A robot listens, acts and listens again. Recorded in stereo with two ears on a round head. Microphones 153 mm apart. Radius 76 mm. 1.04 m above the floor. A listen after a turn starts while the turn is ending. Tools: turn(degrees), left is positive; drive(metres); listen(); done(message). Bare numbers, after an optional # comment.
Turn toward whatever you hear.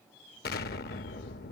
# The explosion: about 60° left or 120° left.
turn(60)
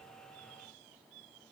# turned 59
listen()
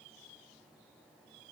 done("I heard an explosion, but can't make it out now. It was about straight ahead or 60° left.")